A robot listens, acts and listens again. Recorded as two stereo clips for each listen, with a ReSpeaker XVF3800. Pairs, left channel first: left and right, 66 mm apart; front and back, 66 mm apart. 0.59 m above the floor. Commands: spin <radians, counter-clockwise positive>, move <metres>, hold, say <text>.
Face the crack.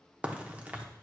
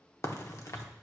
spin -0.44
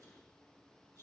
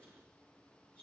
say I heard a crack from this way, but can't make it out now.